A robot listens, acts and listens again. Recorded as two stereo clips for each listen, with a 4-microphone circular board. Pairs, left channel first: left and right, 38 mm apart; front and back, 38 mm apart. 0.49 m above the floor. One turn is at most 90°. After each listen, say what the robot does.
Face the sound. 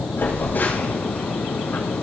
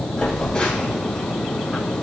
Turn 65° left.
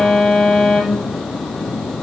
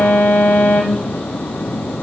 Facing the phone buzzing, over 4 m away.